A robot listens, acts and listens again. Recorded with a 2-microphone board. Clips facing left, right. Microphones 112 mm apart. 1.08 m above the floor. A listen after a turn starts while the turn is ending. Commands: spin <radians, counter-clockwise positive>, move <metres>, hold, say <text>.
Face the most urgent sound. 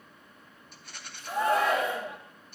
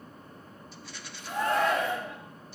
spin 0.52
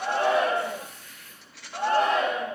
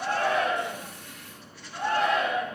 spin 2.44
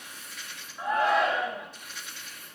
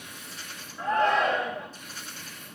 spin 0.17
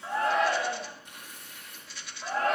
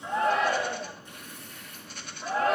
say Facing the shout.